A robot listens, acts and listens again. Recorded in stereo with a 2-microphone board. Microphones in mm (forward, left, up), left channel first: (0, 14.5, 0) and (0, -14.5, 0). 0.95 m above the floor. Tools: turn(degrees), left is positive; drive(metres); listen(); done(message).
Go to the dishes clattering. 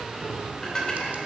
turn(degrees=25)
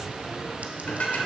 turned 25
turn(degrees=130)
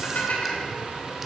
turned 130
turn(degrees=70)
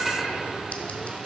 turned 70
drive(metres=1.0)
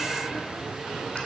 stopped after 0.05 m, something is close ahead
done("Something is in my way. I am facing the dishes clattering but have not reached it.")